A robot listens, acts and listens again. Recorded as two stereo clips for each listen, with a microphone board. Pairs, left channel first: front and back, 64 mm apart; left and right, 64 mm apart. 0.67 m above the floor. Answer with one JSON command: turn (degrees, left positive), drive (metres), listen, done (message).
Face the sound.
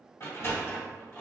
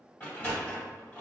{"turn": 25}
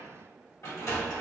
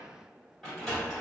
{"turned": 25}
{"done": "Facing the sliding door, 1 to 2 m away."}